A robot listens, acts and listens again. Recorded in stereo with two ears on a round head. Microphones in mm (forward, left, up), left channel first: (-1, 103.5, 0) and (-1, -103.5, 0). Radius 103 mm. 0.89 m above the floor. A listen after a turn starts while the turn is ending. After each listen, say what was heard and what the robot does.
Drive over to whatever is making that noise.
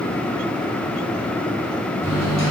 The microwave: about 25° right or 155° right. Turn 25° right.
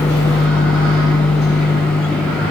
Drive 1.0 m forward.
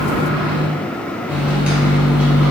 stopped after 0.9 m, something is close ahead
Arrived at the microwave, straight ahead.